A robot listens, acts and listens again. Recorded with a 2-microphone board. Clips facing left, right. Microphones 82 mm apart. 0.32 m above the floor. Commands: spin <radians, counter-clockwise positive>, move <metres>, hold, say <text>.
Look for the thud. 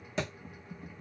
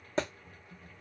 spin -0.61
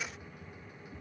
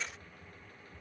hold
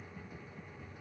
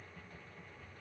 say I heard a thud, but can't make it out now. It was about straight ahead or 110° right.